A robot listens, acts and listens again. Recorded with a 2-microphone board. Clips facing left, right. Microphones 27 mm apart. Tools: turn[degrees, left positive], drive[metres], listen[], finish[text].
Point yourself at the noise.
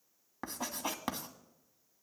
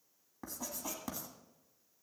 Thought: The writing: about 50° left or 130° left.
Action: turn[50]
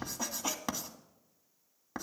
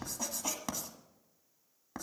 Thought: So it is at 15° left.
Action: turn[15]
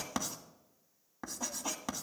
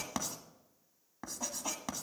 Action: finish[Facing the writing.]